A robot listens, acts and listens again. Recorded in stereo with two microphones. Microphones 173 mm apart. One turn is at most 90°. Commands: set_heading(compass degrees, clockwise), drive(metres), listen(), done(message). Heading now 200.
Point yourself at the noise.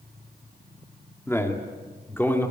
set_heading(170)
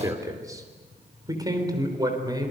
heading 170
set_heading(195)
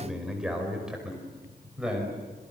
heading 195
done("Found it: a man speaking, straight ahead.")